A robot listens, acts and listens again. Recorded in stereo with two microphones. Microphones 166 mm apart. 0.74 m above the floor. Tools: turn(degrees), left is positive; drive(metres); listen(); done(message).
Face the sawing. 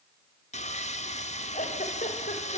turn(degrees=45)
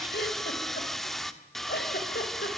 done("Facing the sawing, 1 to 2 m away.")